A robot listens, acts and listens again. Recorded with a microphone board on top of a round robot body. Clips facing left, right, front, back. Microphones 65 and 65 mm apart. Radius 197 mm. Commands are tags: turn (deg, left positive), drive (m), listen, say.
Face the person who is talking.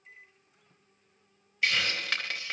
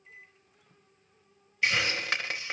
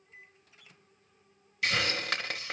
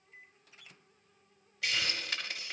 <listen/>
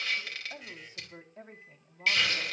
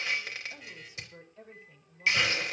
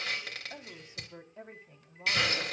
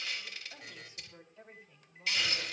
<turn deg="45"/>
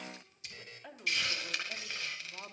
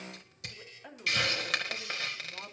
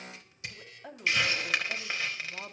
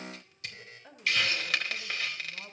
<say>Found it: a woman speaking, straight ahead, 2 to 4 m away.</say>